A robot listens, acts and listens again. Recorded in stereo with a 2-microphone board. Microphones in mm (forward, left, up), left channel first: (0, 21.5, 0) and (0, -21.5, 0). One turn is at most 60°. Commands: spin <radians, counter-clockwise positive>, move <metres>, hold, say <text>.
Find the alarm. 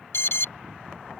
spin 1.05
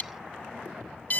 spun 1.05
spin 0.79
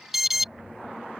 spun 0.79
say Found it: an alarm, straight ahead.